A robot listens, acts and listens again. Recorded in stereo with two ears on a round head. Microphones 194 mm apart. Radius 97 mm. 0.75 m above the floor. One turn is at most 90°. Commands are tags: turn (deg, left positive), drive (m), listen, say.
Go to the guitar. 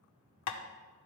<listen/>
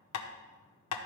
<listen/>
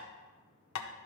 <say>I can't make out a guitar to turn to.</say>